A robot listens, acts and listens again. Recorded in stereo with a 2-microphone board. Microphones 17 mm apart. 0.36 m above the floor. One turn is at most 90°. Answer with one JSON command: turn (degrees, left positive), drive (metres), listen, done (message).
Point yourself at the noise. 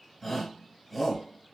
{"turn": 30}
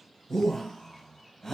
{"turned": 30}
{"turn": 90}
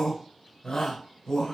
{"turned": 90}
{"turn": 65}
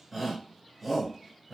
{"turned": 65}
{"turn": -10}
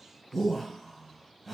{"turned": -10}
{"done": "Facing the shout, 1 to 2 m away."}